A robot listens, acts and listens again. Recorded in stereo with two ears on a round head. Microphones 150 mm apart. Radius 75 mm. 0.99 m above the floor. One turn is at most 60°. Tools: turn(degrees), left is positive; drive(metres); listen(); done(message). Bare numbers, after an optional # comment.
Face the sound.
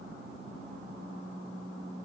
listen()
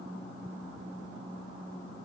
listen()
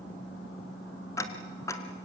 # The ticking: about 20° left or 160° left.
turn(20)
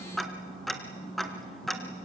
done("Facing the ticking.")